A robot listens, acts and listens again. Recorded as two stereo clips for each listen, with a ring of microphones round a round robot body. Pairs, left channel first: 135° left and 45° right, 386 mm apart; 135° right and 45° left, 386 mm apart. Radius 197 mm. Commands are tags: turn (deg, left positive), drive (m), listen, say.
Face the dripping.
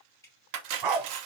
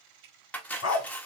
<turn deg="50"/>
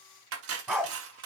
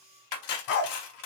<listen/>
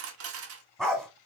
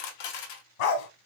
<listen/>
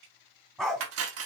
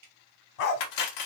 <say>Facing the dripping, 2 to 4 m away.</say>